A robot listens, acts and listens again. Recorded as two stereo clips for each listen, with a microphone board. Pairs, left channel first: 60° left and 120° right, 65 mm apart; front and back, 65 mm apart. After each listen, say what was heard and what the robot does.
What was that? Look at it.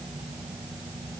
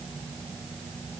Keep listening.
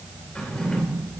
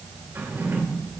The drawer: 130° left. Turn 130° left.
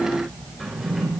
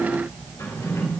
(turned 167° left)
The drawer is now 35° right. Turn 35° right.
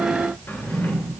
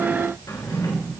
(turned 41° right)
Facing the drawer.